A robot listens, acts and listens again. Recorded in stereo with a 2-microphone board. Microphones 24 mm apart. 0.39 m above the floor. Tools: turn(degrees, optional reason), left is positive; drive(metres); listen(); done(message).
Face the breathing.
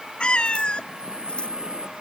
turn(degrees=-45, reason="The breathing: about 45° right or 135° right.")
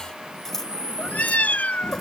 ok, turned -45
turn(degrees=-90, reason="So it is at 90° right.")
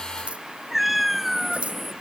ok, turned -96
done("Found it: breathing, straight ahead.")